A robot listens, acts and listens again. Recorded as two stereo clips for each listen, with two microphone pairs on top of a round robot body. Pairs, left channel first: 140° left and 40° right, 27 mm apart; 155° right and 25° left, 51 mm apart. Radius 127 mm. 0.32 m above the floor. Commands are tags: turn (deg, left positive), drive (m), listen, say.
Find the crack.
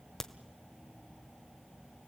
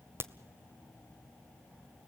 <turn deg="55"/>
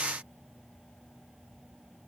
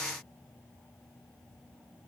<say>Facing where the crack came from. I can't hear it now.</say>